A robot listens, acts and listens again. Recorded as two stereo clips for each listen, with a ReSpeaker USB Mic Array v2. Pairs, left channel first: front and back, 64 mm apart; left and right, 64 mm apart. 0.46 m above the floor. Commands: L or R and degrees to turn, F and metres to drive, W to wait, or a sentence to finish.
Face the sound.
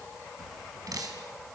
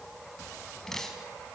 L175
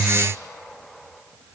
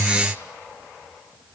W
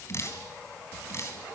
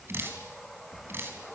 R40
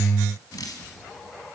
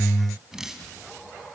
R10
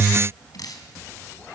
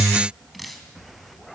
Facing the dripping, 2 to 4 m away.